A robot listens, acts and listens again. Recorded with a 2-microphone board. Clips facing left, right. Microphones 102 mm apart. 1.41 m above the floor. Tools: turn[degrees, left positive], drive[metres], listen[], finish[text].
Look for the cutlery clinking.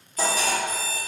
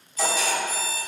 Thought: The cutlery clinking: about 50° left or 130° left.
Action: turn[50]
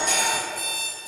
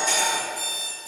Thought: So it is at 65° left.
Action: turn[65]
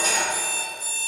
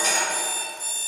Thought: The cutlery clinking is now 10° left.
Action: turn[10]
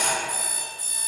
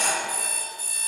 Action: finish[Facing the cutlery clinking, 1 to 2 m away.]